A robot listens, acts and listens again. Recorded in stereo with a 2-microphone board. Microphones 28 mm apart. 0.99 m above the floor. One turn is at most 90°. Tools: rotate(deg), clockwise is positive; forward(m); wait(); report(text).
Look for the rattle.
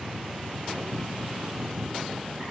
wait()
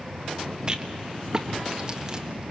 rotate(30)
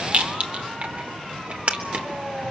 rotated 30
rotate(90)
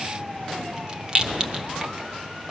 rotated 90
rotate(35)
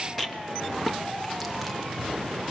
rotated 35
report("Found it: a rattle, straight ahead.")